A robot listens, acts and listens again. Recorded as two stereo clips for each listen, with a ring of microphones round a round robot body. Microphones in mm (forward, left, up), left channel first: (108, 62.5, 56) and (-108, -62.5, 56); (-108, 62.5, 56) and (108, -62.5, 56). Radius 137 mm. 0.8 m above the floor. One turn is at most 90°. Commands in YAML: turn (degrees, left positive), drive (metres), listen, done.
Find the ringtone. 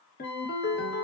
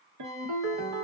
turn: -20
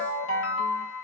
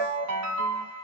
done: "Found it: a ringtone, straight ahead."